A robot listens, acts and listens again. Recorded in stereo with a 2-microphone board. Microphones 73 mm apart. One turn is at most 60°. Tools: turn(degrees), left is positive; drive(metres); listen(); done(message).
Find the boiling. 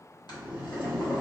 turn(degrees=60)
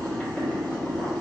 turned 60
turn(degrees=20)
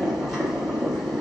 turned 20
done("Facing the boiling, under 1 m away.")